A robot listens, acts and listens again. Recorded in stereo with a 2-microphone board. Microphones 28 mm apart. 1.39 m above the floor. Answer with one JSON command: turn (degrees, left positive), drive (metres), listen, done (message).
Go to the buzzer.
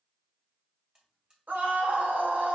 {"turn": -25}
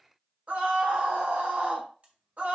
{"turn": -130}
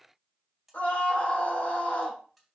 {"drive": 1.0}
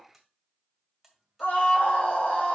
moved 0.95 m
{"drive": 1.0}
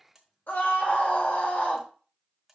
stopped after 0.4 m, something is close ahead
{"turn": -10}
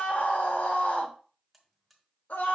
{"done": "I am next to the buzzer."}